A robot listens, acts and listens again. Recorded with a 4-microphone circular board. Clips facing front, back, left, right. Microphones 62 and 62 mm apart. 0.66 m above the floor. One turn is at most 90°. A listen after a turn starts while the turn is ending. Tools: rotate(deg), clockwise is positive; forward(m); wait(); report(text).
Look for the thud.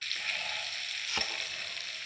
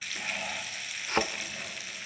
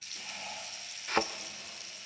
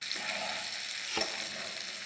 rotate(-90)
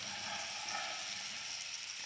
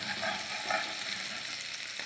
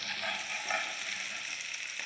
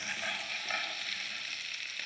rotate(-35)
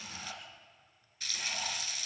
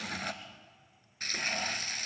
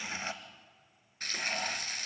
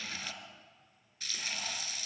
report("I heard a thud from this way, but can't make it out now.")